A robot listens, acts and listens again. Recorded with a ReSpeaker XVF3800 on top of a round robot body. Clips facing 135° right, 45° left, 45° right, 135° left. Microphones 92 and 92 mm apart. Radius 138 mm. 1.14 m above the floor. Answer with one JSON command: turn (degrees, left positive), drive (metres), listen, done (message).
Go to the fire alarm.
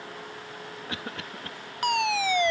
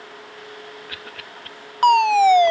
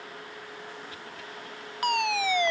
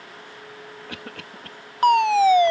{"turn": 85}
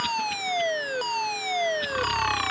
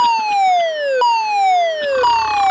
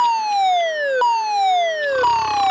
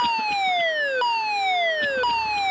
{"turn": 20}
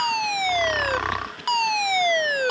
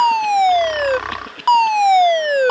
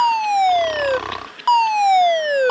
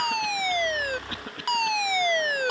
{"drive": 1.0}
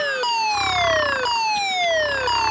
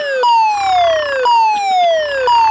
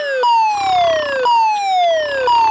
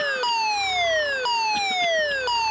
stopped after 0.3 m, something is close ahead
{"done": "Something is in my way. I am facing the fire alarm but have not reached it."}